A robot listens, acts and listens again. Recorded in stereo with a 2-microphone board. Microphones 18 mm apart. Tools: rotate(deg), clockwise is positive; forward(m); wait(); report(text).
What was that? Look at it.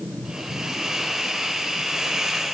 rotate(35)
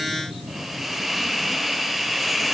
report("Found it: a hiss, straight ahead, 2 to 4 m away.")